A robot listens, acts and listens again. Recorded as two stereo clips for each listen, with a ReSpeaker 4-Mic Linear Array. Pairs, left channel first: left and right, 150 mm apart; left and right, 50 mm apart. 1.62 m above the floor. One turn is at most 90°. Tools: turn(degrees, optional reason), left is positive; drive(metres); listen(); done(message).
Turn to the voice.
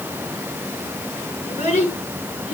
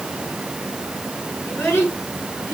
turn(degrees=50, reason="The child speaking: about 50° left or 130° left.")
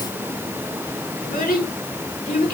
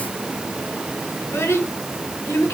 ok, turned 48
turn(degrees=80, reason="So it is at 80° left.")
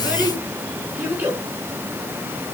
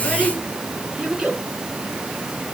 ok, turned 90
turn(degrees=-10, reason="The child speaking is now 10° right.")
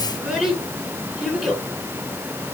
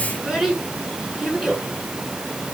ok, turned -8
done("Facing the child speaking.")